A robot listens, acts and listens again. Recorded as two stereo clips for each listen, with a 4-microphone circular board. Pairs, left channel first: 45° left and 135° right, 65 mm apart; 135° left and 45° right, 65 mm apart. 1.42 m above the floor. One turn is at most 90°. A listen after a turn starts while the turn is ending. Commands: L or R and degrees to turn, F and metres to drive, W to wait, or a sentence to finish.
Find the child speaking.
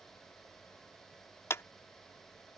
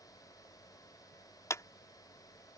W
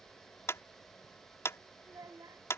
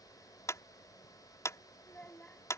R90
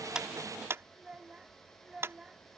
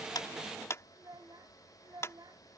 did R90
R55
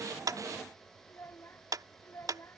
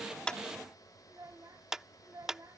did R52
Found it: a child speaking, straight ahead.